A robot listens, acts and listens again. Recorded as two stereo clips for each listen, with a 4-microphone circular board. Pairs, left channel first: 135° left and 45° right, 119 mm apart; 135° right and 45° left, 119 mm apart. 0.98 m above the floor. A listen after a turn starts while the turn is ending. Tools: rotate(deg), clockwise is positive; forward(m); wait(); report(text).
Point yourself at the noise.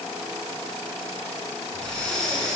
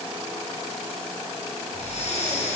rotate(140)
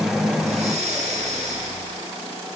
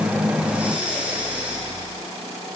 rotate(35)
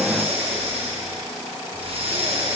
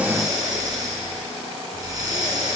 rotate(10)
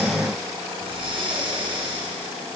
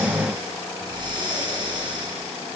report("Found it: breathing, straight ahead, 2 to 4 m away.")